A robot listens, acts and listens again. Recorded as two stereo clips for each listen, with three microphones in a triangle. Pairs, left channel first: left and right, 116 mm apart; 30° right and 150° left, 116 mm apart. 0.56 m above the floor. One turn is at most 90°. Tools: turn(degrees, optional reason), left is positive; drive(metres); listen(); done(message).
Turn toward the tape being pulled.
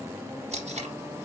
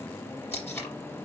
turn(degrees=-90, reason="The tape being pulled: 100° right.")
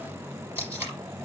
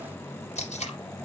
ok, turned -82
turn(degrees=-20, reason="The tape being pulled is now 20° right.")
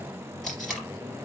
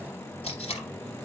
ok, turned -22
done("Found it: tape being pulled, straight ahead, 2 to 4 m away.")